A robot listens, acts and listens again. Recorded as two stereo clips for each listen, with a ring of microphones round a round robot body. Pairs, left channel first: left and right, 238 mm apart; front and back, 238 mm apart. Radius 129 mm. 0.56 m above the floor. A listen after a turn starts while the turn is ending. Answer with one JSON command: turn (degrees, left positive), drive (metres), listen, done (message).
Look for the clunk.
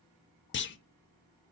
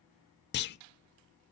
{"turn": 45}
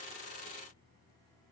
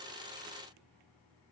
{"done": "I heard a clunk from this way, but can't make it out now."}